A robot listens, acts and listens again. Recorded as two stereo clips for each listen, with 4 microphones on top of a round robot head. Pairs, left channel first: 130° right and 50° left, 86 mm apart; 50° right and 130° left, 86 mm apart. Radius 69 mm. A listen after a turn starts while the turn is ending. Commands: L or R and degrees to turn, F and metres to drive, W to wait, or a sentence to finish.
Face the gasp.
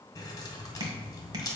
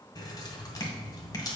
W
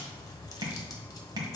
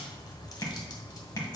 W
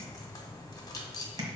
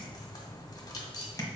I can't make out a gasp to turn to.